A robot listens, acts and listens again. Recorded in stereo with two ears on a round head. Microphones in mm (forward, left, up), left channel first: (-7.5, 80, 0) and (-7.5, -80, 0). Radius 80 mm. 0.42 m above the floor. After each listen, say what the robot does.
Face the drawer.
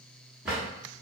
Turn 30° right.
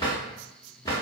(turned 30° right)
Turn 25° left.
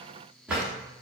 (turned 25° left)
Facing the drawer, 1 to 2 m away.